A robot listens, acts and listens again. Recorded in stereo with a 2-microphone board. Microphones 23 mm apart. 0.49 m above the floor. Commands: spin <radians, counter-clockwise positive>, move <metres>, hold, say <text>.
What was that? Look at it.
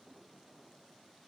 hold
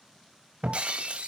spin -1.13
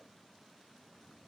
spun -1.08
hold
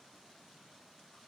say I heard breaking glass, but can't make it out now. It was about straight ahead or 55° right.